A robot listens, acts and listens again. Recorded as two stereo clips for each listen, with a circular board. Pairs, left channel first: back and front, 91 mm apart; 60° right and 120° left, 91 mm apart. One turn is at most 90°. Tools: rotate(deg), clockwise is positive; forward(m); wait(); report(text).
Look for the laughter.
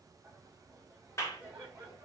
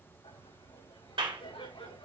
rotate(70)
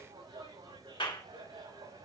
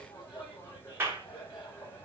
rotate(15)
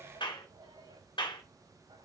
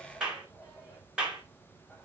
report("Found it: laughter, straight ahead, over 4 m away.")